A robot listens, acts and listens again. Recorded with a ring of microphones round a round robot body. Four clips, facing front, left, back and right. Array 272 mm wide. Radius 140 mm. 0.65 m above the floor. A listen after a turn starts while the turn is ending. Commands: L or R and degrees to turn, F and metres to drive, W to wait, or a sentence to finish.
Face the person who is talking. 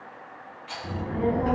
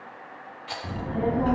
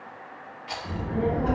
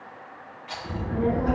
L70
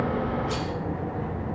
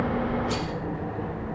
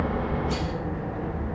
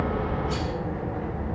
L20
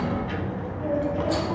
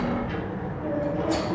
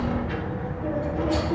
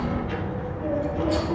Facing the child speaking, 2 to 4 m away.